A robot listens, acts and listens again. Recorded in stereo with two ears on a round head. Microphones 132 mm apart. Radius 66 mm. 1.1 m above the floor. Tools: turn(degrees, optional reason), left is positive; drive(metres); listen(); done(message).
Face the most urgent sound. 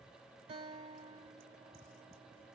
listen()
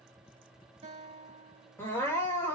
turn(degrees=20, reason="The crying: about 20° left or 160° left.")
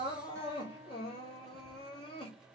turn(degrees=140, reason="So it is at 140° left.")
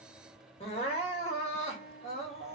turn(degrees=40, reason="The crying is now 40° left.")
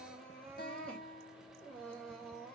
done("Found it: crying, straight ahead.")